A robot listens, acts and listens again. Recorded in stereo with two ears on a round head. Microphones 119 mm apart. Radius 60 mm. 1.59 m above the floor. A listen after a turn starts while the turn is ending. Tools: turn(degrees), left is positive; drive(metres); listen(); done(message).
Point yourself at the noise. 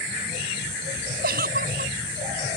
turn(degrees=-90)
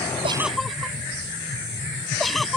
done("Found it: a giggle, straight ahead.")